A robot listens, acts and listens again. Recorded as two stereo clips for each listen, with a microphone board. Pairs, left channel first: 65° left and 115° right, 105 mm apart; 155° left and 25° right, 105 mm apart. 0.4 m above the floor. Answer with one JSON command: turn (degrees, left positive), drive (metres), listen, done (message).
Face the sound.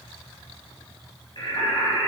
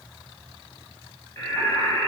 {"turn": 95}
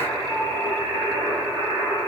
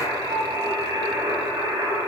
{"done": "Found it: singing, straight ahead, over 4 m away."}